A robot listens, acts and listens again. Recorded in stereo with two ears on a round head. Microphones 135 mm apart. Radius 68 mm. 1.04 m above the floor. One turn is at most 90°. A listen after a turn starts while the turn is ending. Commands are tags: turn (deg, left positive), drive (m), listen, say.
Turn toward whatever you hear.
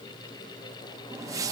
<turn deg="-25"/>
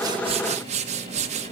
<turn deg="-90"/>
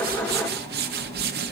<turn deg="-80"/>
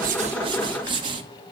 <turn deg="-35"/>
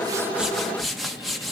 <say>Facing the whoosh, under 1 m away.</say>